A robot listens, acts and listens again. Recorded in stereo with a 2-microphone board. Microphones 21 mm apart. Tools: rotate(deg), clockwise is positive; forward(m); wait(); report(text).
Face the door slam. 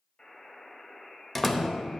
rotate(-30)
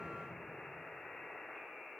wait()
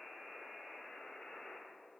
report("I heard a door slam, but can't make it out now. It was about 25° right or 145° left.")